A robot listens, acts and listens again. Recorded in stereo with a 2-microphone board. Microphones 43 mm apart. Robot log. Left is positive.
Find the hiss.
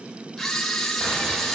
cmd idle
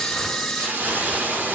note: The hiss: about 50° right or 130° right.
cmd yaw -50
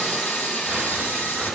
cmd idle
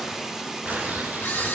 note: So it is at 10° right.
cmd yaw -10
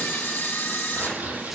cmd idle
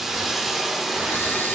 end: Found it: a hiss, straight ahead, 1 to 2 m away.